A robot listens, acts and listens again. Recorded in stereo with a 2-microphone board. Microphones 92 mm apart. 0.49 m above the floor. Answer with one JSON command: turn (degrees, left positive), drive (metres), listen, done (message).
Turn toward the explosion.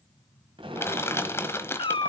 {"turn": -70}
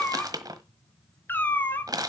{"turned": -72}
{"listen": true}
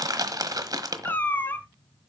{"done": "I heard an explosion, but can't make it out now. It was about straight ahead or 35° right."}